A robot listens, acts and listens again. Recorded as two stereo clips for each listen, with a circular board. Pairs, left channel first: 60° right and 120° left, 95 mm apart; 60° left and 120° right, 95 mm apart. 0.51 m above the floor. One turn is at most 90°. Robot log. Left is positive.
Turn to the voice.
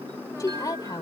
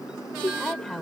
note: The woman speaking: 25° right.
cmd yaw -25
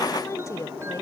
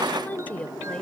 note: The woman speaking is now 10° right.
cmd yaw -10
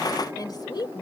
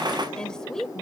note: The woman speaking is now 25° right.
cmd yaw -25
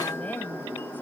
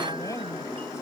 cmd idle
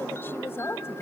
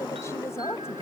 end: Facing the woman speaking.